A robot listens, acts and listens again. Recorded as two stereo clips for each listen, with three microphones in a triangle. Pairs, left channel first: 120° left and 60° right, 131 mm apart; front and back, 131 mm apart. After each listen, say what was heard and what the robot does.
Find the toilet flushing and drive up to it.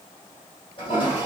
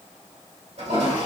The toilet flushing: 160° left. Turn 160° left.
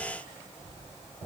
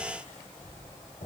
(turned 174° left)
The toilet flushing is now 10° right. Turn 10° right.
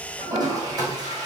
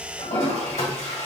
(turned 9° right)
Drive 1.0 m forward.
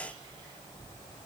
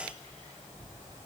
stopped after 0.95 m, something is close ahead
Keep listening.
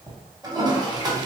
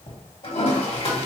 The toilet flushing is now 15° right. Turn 15° right.
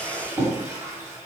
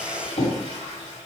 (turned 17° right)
I am next to the toilet flushing.